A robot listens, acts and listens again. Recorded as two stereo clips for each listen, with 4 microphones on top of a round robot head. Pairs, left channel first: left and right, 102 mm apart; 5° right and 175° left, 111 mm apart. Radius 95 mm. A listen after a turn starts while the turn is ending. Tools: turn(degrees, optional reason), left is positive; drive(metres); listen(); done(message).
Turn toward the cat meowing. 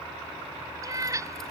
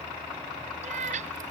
turn(degrees=-150, reason="The cat meowing: 150° right.")
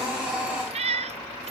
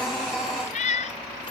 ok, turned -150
turn(degrees=-50, reason="The cat meowing is now 50° right.")
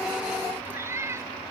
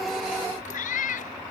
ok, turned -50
turn(degrees=-20, reason="The cat meowing is now 20° right.")
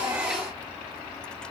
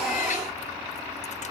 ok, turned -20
listen()
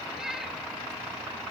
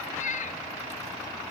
done("Facing the cat meowing.")